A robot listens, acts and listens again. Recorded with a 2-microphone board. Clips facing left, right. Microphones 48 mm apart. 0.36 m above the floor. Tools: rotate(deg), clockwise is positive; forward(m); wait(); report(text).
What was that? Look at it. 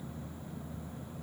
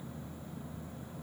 wait()
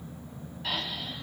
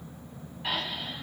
rotate(15)
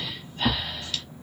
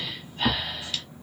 report("Found it: breathing, straight ahead.")